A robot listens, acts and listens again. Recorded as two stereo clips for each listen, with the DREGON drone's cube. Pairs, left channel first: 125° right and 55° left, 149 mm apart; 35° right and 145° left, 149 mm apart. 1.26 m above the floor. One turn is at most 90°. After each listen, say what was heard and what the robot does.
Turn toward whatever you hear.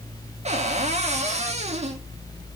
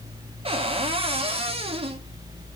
The cupboard door: 95° left. Turn 90° left.
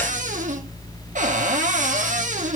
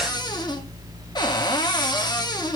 The cupboard door is now 25° left. Turn 25° left.
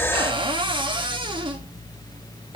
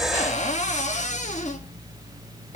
Facing the cupboard door.